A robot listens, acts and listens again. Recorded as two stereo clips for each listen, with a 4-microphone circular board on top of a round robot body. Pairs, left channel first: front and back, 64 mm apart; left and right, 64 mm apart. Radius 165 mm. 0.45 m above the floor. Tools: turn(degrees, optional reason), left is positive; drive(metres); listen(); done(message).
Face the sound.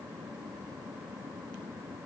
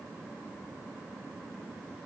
listen()
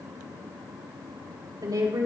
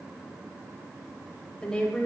turn(degrees=165, reason="The woman speaking: 165° left.")
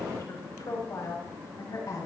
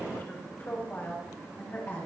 turn(degrees=30, reason="The woman speaking is now 30° left.")
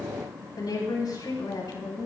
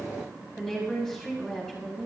turn(degrees=10, reason="The woman speaking is now 10° left.")
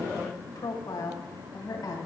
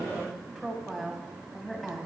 done("Found it: a woman speaking, straight ahead, over 4 m away.")